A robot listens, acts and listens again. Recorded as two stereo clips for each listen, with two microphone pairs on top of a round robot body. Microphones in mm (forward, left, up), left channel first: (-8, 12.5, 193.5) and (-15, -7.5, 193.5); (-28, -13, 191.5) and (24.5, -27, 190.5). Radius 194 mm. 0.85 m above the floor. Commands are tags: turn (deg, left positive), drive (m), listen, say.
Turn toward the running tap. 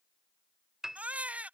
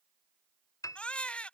<listen/>
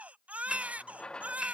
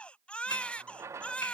<turn deg="25"/>
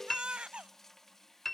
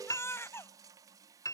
<say>Facing the running tap.</say>